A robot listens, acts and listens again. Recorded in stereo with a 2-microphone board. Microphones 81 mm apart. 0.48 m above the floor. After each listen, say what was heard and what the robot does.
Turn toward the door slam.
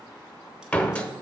Turn 30° left.
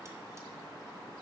Keep listening.
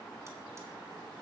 I heard a door slam, but can't make it out now. It was about 15° right or 135° left.